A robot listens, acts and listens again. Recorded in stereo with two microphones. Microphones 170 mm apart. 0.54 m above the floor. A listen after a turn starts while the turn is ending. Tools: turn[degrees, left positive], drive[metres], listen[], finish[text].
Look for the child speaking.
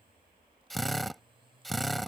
Action: listen[]
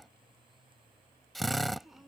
Action: turn[30]
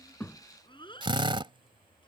Thought: So it is at 150° left.
Action: turn[150]
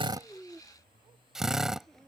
Action: finish[Facing the child speaking.]